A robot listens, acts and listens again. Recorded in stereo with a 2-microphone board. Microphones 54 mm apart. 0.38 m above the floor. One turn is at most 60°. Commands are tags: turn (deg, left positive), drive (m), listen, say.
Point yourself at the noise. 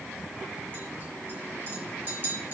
<turn deg="-40"/>
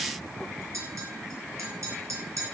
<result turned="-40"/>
<turn deg="-60"/>
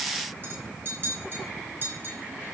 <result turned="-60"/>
<turn deg="-45"/>
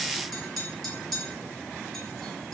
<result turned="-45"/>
<say>Facing the clink, over 4 m away.</say>